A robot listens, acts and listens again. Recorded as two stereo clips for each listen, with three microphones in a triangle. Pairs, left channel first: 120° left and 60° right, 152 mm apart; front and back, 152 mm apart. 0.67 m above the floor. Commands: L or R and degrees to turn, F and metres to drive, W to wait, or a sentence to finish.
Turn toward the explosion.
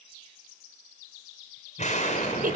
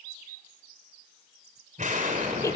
L150
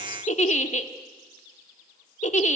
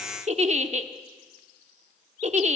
I heard an explosion from this way, but can't make it out now.